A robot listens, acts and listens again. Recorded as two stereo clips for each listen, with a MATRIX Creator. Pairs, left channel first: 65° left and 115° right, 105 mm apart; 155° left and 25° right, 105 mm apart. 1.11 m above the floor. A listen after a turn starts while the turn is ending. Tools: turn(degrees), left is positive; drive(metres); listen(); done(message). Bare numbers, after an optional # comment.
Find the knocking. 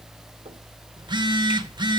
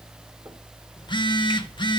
listen()
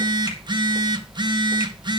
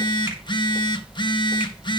listen()
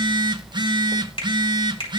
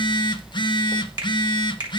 done("I can't make out knocking, only a finger snap and a phone buzzing.")